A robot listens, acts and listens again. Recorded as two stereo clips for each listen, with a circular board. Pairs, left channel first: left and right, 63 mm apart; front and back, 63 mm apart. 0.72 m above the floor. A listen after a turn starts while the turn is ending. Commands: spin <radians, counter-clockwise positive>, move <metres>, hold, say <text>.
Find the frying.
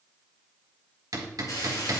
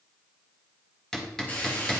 spin 1.13
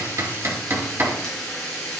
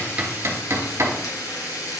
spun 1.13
spin 0.17
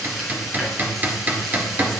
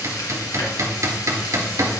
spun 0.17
say Found it: frying, straight ahead, 2 to 4 m away.